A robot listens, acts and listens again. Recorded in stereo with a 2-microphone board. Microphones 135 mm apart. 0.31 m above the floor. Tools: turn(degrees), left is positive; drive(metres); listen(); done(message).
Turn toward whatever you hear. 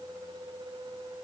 listen()
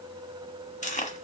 turn(degrees=60)
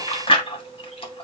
turn(degrees=45)
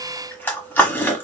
turn(degrees=15)
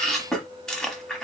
done("Found it: chewing, straight ahead, 1 to 2 m away.")